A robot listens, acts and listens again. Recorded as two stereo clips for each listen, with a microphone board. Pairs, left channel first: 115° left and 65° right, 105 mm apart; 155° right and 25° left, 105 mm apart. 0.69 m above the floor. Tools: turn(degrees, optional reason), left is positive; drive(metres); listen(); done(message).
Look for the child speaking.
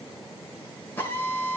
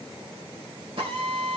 listen()
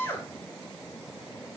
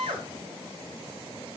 listen()
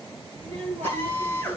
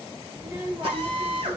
turn(degrees=-40, reason="The child speaking: 40° right.")
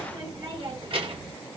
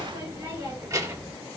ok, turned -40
turn(degrees=-40, reason="The child speaking is now 40° right.")
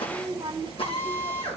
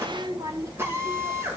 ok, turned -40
turn(degrees=-40, reason="The child speaking is now 40° right.")
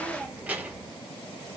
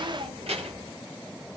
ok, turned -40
turn(degrees=10, reason="The child speaking is now 10° left.")
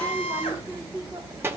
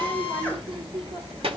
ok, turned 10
done("Facing the child speaking, 1 to 2 m away.")